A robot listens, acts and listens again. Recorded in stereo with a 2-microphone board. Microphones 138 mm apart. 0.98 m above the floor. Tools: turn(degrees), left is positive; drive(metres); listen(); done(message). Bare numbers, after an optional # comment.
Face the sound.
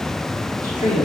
# The woman speaking: about 75° left or 105° left.
turn(75)
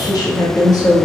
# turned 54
# So it is at 25° left.
turn(25)
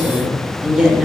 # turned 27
done("Facing the woman speaking.")